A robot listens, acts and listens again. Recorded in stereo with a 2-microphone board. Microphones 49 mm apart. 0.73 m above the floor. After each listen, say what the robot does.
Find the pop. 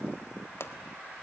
Turn 55° left.
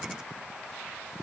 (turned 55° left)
Keep listening.
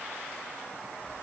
I heard a pop, but can't make it out now. It was about straight ahead or 70° left.